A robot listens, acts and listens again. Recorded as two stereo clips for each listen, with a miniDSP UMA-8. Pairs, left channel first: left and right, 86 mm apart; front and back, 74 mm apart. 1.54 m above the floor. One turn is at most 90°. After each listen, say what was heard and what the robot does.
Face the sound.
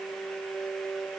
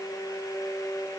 Keep listening.
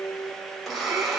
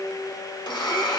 Found it: a blender, straight ahead, 1 to 2 m away.